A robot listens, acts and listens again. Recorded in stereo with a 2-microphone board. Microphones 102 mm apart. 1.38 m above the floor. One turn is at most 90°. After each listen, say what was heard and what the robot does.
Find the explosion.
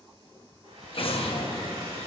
The explosion: about 65° left or 115° left. Turn 65° left.
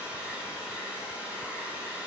Keep listening.
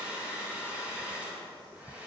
I heard an explosion, but can't make it out now. It was about straight ahead or 50° left.